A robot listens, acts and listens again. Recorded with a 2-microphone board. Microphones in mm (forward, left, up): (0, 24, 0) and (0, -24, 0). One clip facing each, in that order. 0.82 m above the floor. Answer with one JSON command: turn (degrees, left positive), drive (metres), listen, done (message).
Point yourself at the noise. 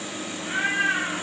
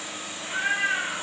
{"turn": 60}
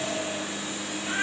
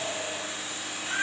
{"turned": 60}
{"done": "Facing the cat meowing, 1 to 2 m away."}